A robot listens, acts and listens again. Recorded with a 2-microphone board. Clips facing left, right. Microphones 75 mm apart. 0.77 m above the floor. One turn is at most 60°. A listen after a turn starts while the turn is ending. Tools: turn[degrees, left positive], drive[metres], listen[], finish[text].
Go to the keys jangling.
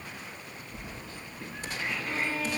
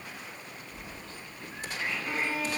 Action: turn[30]
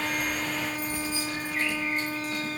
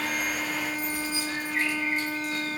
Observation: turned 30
Thought: So it is at 135° left.
Action: turn[60]
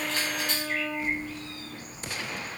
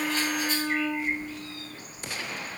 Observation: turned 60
Thought: The keys jangling is now 80° left.
Action: turn[60]
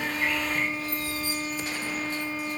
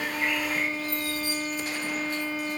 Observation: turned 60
Thought: The keys jangling is now 30° left.
Action: turn[30]
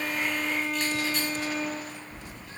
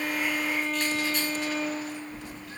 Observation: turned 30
Action: drive[1.0]
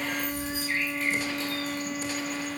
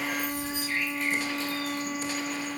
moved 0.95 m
Action: drive[1.0]
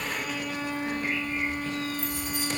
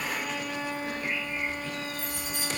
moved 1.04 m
Action: drive[1.0]
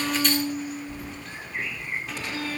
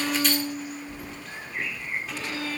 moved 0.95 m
Action: drive[1.0]
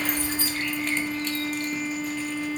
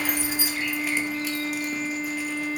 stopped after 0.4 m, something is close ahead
Thought: The keys jangling is now 10° right.
Action: turn[-10]
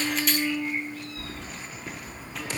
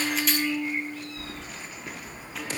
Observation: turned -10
Action: finish[I am next to the keys jangling.]